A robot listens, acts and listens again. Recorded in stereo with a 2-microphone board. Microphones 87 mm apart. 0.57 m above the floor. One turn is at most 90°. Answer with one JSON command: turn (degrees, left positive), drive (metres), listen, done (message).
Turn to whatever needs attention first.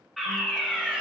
{"turn": 30}
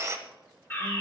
{"turn": 90}
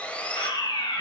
{"turn": 90}
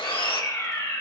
{"turn": 35}
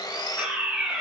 {"turn": -15}
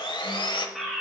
{"done": "Found it: a fire alarm, straight ahead, 2 to 4 m away."}